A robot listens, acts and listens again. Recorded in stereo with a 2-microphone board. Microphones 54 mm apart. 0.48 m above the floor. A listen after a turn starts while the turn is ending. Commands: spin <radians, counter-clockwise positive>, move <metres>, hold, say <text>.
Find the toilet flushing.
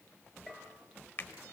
hold
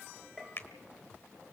hold
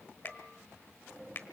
say I can't make out a toilet flushing, only a bell and a finger snap.